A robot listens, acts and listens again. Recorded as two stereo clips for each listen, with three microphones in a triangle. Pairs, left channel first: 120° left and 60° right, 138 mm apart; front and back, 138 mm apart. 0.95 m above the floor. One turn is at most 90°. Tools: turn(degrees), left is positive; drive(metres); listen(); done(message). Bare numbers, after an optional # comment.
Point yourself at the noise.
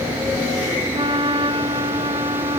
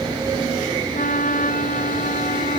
# The flute: 10° right.
turn(-10)
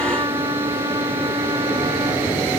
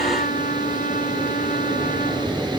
done("Facing the flute.")